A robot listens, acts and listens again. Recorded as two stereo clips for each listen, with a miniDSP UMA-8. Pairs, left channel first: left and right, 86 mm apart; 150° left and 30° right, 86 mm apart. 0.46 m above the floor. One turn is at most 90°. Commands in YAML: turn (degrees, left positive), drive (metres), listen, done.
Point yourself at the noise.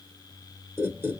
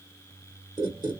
turn: -30
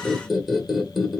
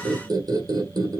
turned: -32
done: "Found it: a squeak, straight ahead."